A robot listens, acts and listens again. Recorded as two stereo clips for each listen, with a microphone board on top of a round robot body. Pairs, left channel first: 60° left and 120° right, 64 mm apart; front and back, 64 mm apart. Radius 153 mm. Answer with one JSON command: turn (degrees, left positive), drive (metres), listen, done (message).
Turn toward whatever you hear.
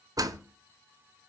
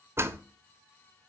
{"turn": -135}
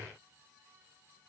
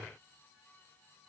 {"done": "Facing where the door slam came from. I can't hear it now."}